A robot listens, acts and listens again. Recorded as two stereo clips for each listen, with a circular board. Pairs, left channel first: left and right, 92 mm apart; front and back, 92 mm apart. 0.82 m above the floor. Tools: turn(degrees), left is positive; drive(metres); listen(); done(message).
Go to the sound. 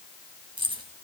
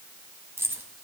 turn(degrees=-120)
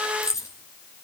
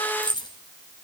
turn(degrees=35)
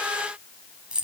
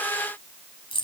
turn(degrees=-10)
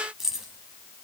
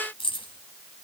drive(metres=1.0)
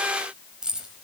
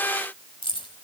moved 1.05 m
turn(degrees=-10)
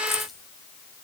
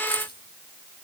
drive(metres=1.0)
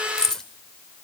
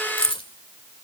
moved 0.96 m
drive(metres=1.0)
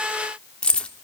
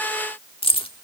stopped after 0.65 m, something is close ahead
turn(degrees=10)
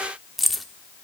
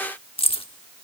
done("Arrived at the keys jangling, straight ahead.")